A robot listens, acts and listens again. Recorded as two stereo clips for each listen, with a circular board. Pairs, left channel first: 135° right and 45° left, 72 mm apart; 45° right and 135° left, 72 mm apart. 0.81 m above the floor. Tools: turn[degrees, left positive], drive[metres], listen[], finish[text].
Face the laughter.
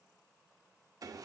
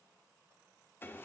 Action: listen[]
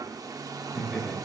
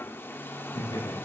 Thought: The laughter: 45° right.
Action: turn[-45]
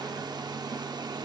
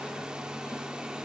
Action: listen[]
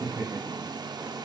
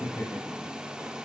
Thought: The laughter is now 10° left.
Action: turn[10]
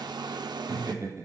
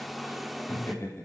Thought: The laughter is now 10° left.
Action: turn[10]
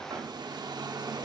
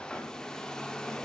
Action: listen[]
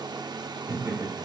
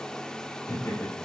Action: finish[Found it: laughter, straight ahead, over 4 m away.]